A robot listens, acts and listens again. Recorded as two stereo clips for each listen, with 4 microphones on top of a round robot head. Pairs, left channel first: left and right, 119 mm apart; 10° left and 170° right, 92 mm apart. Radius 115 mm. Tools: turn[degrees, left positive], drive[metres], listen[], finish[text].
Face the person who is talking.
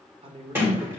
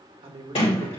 Thought: The man speaking: 135° right.
Action: turn[-135]
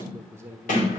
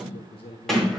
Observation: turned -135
Thought: The man speaking is now 20° right.
Action: turn[-20]
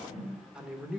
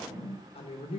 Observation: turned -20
Action: finish[Facing the man speaking, 1 to 2 m away.]